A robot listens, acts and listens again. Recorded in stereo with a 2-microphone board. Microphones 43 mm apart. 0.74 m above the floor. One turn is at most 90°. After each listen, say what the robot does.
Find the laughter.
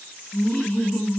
Turn 45° left.
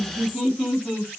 Turn 10° left.
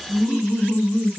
Facing the laughter, 1 to 2 m away.